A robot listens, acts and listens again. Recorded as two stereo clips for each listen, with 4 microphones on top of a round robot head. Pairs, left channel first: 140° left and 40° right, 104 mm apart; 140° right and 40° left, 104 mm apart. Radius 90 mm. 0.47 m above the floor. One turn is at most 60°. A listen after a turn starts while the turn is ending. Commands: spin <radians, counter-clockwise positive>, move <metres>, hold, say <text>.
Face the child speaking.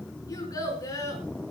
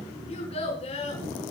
spin -1.05
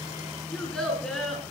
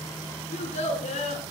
spin -1.05
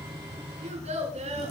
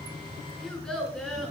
spin -0.96
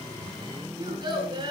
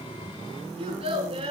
say Found it: a child speaking, straight ahead, over 4 m away.